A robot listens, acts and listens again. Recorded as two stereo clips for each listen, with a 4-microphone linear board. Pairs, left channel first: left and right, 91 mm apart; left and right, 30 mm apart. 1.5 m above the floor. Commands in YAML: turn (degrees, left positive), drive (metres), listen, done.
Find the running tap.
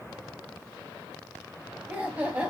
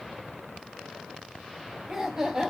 listen: true
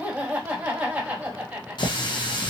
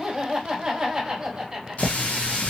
turn: 55
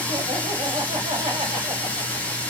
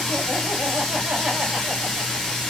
turn: 20
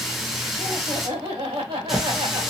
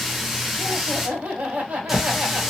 done: "Facing the running tap."